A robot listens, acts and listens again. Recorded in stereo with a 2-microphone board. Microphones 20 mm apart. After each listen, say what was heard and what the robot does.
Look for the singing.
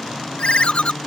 Keep listening.
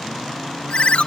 Keep listening.
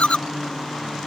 I can't make out singing, only a ringtone.